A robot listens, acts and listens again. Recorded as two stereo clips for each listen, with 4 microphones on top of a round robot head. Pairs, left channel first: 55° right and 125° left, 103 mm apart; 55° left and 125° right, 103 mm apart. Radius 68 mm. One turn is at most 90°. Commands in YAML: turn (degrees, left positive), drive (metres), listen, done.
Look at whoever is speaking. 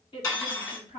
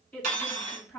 turn: -20
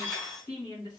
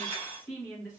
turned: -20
turn: -10
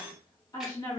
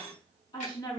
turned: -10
done: "Facing the woman speaking, 1 to 2 m away."